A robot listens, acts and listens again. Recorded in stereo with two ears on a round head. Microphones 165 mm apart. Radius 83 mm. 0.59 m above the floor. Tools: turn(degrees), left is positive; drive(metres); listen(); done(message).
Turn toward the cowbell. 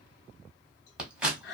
listen()
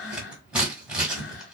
listen()
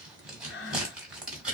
done("I can't make out a cowbell, only scissors and breathing.")